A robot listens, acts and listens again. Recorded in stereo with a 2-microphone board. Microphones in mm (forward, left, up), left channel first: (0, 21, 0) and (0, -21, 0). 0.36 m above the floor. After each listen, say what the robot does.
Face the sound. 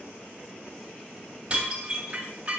Turn 30° right.
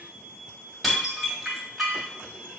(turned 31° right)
Facing the dishes clattering.